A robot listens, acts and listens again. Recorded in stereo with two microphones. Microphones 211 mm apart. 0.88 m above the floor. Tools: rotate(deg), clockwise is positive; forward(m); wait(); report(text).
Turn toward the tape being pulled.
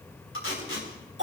rotate(-90)
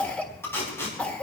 rotate(-10)
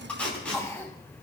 report("Found it: tape being pulled, straight ahead, over 4 m away.")